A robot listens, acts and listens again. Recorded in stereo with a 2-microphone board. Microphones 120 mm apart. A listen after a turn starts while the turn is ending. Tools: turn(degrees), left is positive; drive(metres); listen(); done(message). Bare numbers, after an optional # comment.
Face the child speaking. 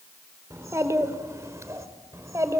# The child speaking: about 25° right or 155° right.
turn(-25)
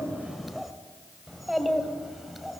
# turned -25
done("Facing the child speaking.")